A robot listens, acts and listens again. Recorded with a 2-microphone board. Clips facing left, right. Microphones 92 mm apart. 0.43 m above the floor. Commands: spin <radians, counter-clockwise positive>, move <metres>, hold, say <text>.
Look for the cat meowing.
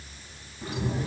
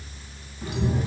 spin 0.52
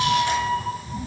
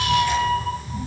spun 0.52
spin 0.52
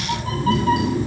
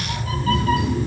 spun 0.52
spin 2.71
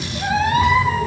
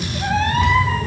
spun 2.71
spin 0.17
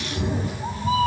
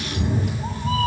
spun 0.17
spin 0.17
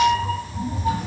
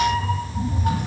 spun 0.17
say Found it: a cat meowing, straight ahead, 1 to 2 m away.